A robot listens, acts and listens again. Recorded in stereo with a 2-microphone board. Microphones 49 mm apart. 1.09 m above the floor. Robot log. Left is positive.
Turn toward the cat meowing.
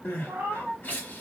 note: The cat meowing: about 50° right or 130° right.
cmd yaw -50
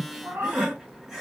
note: So it is at 65° right.
cmd yaw -65
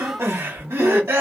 cmd idle
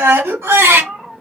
end: Found it: a cat meowing, straight ahead.